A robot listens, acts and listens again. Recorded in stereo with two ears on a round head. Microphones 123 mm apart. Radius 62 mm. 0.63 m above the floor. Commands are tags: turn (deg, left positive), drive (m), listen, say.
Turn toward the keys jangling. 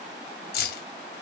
<turn deg="90"/>
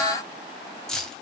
<say>Found it: keys jangling, straight ahead.</say>